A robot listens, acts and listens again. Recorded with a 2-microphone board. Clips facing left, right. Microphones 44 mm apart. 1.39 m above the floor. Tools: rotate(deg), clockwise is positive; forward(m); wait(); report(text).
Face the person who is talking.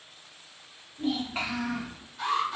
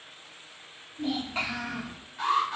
rotate(-30)
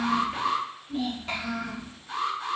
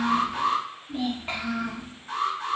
rotate(25)
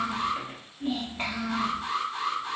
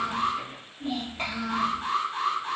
report("Facing the child speaking, under 1 m away.")